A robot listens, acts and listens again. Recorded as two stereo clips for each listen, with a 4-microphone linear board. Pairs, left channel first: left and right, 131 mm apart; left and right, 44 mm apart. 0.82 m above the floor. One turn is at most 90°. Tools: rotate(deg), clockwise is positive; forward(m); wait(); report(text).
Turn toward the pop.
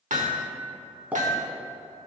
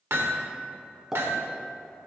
rotate(30)
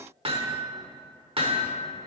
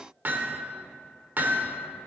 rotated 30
wait()
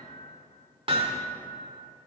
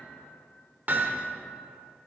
report("I heard a pop, but can't make it out now. It was about 20° left or 140° right.")